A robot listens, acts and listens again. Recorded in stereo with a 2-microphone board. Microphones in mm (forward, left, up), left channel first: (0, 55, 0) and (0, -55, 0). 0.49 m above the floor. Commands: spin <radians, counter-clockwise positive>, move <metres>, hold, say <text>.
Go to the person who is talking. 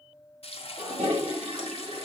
hold
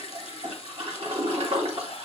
hold
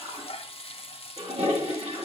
say I can't make out anyone speaking, only frying and a toilet flushing.